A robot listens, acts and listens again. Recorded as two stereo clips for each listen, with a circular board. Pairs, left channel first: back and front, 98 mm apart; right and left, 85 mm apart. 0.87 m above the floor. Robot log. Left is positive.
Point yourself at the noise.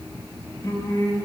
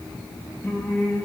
note: The singing: 150° right.
cmd yaw -150
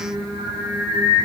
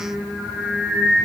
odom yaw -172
note: The singing is now 25° left.
cmd yaw +25
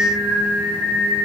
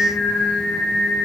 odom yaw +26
end: Facing the singing, 1 to 2 m away.